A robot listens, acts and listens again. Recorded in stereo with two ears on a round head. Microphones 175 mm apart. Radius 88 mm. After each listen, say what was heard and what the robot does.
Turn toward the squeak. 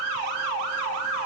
Keep listening.
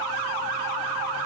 Keep listening.
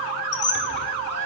The squeak: about 60° left or 120° left. Turn 60° left.
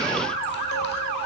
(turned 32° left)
Keep listening.
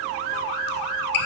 So it is at 65° left. Turn 65° left.
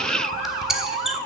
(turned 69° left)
Facing the squeak.